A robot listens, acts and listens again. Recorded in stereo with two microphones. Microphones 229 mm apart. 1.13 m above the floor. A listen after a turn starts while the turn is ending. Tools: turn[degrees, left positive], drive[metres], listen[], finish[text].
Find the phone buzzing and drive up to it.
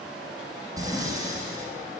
Action: listen[]
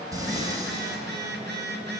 Thought: The phone buzzing: about 45° right or 135° right.
Action: turn[-45]
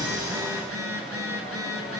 Thought: So it is at 85° right.
Action: turn[-85]
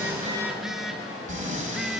Action: drive[1.0]
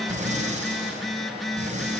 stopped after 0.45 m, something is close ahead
Action: finish[Blocked. The phone buzzing is further on, straight ahead.]